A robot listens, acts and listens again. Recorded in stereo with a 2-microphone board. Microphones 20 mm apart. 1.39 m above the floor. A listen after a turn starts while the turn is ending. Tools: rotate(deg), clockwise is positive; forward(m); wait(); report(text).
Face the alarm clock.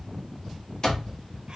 rotate(-50)
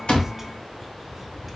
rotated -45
wait()
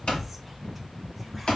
rotate(-75)
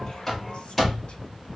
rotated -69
report("Found it: an alarm clock, straight ahead.")